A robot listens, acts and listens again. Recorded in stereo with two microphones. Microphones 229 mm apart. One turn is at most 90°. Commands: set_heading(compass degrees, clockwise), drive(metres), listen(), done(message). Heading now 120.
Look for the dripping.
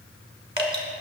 set_heading(145)
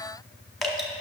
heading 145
done("Found it: dripping, straight ahead.")